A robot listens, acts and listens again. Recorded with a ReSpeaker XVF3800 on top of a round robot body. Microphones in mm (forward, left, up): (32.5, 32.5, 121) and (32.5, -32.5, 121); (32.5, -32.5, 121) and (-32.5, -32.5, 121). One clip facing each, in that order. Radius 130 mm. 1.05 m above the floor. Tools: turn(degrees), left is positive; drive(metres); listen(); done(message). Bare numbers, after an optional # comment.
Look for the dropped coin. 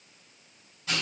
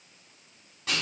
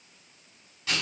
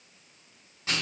listen()
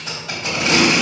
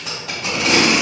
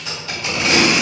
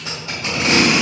listen()
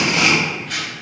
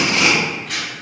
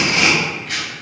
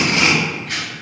done("I can't make out a dropped coin to turn to.")